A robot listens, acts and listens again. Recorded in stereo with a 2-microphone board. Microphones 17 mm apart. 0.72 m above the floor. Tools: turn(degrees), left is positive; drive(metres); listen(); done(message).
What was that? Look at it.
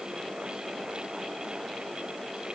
listen()
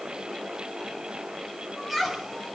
turn(degrees=-30)
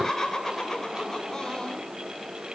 turn(degrees=30)
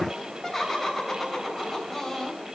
done("Facing the laughter.")